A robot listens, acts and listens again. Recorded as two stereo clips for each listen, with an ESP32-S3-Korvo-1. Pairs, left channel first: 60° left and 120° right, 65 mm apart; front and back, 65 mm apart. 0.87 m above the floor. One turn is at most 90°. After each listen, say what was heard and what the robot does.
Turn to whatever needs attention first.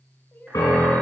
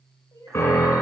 The crying: 10° left. Turn 10° left.
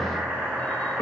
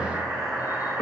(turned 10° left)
Keep listening.
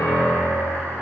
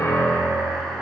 Keep listening.
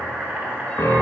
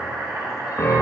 I heard crying from this way, but can't make it out now.